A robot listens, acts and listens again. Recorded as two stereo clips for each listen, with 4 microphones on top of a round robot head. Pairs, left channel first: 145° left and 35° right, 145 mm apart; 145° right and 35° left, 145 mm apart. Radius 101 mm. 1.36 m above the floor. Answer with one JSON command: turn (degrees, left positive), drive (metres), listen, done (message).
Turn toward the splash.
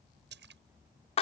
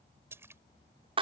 {"turn": -40}
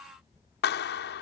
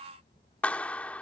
{"done": "Facing where the splash came from. I can't hear it now."}